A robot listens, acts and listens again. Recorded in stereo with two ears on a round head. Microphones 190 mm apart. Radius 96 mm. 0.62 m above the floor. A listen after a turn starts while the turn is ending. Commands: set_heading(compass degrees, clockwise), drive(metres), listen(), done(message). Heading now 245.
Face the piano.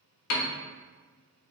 set_heading(155)
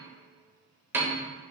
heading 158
set_heading(168)
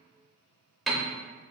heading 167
done("Found it: a piano, straight ahead.")